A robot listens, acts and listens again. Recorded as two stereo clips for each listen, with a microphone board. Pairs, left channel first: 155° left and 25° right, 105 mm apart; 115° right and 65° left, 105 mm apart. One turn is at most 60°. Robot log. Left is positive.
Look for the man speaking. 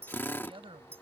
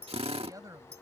note: The man speaking: 10° left.
cmd yaw +10
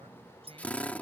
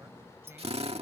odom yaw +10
cmd idle
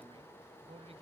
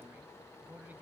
end: Found it: a man speaking, straight ahead.